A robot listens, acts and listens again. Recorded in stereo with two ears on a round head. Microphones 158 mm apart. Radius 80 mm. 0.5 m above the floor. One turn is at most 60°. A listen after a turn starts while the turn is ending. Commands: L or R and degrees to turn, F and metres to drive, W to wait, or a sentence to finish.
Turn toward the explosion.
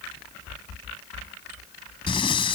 W
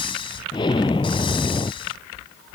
L25
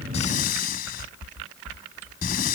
W
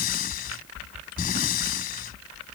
I heard an explosion, but can't make it out now. It was about straight ahead or 130° left.